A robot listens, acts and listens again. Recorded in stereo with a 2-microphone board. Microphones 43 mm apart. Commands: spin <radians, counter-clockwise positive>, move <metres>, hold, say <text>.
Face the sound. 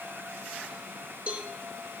spin -0.52
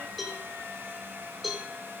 say Facing the cowbell, 2 to 4 m away.